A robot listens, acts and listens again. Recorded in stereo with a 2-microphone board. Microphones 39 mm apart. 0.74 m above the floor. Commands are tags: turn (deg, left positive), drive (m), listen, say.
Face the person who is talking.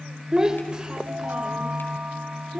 <turn deg="-30"/>
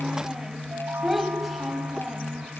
<say>Facing the child speaking.</say>